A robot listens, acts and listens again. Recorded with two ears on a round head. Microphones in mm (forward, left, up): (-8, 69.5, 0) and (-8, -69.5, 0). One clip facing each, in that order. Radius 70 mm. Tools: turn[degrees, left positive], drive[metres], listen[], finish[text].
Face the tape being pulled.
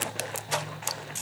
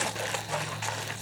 Action: listen[]
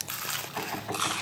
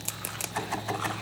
Action: listen[]
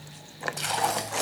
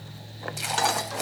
Action: turn[-30]
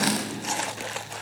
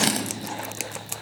Thought: So it is at 145° right.
Action: turn[-145]
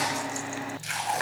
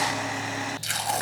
Thought: The tape being pulled is now 45° right.
Action: turn[-45]
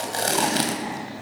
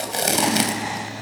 Thought: The tape being pulled is now 25° right.
Action: turn[-25]
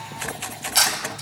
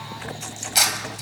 Action: finish[Facing the tape being pulled.]